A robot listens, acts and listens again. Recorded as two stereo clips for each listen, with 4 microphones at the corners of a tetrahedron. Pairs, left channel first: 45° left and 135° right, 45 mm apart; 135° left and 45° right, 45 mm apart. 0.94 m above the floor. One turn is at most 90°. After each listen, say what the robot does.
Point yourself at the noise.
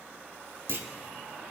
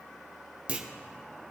Turn 90° right.
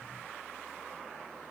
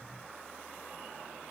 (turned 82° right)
Turn 20° right.
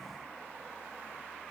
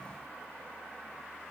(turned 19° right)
Facing where the clunk came from. I can't hear it now.